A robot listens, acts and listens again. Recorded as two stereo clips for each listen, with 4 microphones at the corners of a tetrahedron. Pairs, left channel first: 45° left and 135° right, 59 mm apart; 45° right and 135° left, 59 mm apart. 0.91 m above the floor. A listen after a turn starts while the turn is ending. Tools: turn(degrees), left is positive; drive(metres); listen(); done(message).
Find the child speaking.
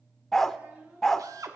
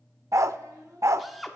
turn(degrees=160)
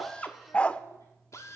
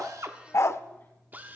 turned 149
turn(degrees=10)
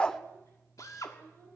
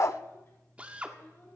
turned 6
done("Facing the child speaking.")